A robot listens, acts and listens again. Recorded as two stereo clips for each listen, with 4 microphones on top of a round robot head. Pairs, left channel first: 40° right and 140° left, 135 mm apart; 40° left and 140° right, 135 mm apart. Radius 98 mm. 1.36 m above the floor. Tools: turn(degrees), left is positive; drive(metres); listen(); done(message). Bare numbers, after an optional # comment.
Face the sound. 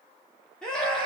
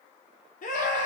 # The scream: 45° left.
turn(45)
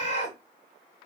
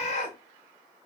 done("Found it: a scream, straight ahead, 1 to 2 m away.")